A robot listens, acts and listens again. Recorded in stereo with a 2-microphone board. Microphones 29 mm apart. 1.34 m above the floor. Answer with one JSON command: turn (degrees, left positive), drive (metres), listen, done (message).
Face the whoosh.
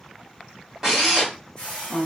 {"turn": 25}
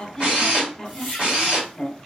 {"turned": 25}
{"done": "Found it: a whoosh, straight ahead, 1 to 2 m away."}